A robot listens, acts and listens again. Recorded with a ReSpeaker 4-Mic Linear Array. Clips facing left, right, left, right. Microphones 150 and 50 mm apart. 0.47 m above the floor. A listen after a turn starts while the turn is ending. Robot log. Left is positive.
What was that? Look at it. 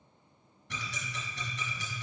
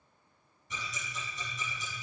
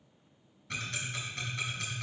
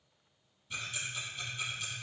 cmd yaw +90
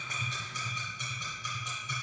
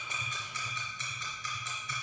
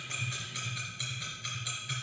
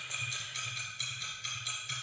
note: So it is at 15° left.
cmd yaw +15
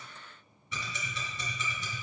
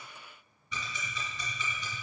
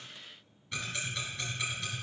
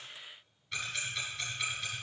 end: Found it: ticking, straight ahead.